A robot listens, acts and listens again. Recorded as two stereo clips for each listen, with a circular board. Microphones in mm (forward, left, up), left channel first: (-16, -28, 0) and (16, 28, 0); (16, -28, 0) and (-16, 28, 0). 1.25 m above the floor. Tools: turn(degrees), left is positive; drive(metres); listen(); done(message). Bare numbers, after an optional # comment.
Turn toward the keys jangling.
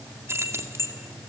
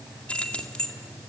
# The keys jangling: 15° left.
turn(15)
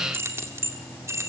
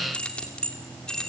# The keys jangling is now 15° left.
turn(15)
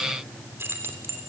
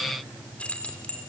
# The keys jangling is now 10° left.
turn(10)
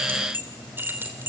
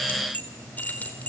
done("Found it: keys jangling, straight ahead.")